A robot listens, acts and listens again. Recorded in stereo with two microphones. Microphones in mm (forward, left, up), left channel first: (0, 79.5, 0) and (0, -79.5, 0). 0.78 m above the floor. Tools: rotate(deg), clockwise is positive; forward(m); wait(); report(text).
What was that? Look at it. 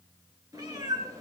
rotate(20)
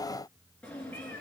rotate(-10)
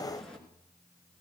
report("Found it: a cat meowing, straight ahead.")